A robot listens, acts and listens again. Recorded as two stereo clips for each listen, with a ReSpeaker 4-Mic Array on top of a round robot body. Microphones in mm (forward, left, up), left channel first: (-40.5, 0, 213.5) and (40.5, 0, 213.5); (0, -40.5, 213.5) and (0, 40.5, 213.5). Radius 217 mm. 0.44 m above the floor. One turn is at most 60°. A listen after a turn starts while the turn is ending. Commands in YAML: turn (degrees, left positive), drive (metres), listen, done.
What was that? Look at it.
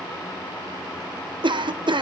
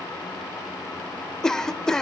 done: "Facing the cough."